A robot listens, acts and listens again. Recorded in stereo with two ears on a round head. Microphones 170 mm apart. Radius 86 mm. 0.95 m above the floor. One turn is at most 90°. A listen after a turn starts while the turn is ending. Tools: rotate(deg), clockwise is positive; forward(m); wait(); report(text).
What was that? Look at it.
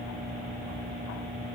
wait()
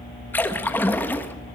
rotate(-30)
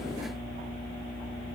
wait()
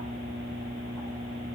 report("I heard a splash, but can't make it out now. It was about 20° right or 140° left.")